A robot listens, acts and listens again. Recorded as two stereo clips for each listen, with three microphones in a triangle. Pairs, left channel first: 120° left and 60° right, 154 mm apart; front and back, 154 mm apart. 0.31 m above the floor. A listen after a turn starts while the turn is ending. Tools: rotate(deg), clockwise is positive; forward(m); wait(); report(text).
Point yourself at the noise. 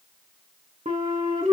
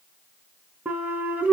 rotate(100)
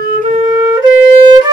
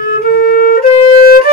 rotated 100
report("Found it: a flute, straight ahead, under 1 m away.")